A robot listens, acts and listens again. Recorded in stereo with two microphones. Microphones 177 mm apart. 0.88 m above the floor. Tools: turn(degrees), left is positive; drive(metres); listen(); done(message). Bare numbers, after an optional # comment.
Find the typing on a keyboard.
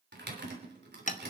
turn(-90)
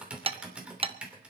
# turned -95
done("Found it: typing on a keyboard, straight ahead.")